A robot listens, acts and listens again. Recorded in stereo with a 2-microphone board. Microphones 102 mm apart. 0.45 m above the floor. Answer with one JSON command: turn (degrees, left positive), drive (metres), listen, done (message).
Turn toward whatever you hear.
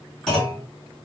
{"turn": 30}
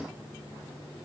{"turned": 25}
{"listen": true}
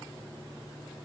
{"done": "I heard a clunk, but can't make it out now. It was about 20° right or 150° left."}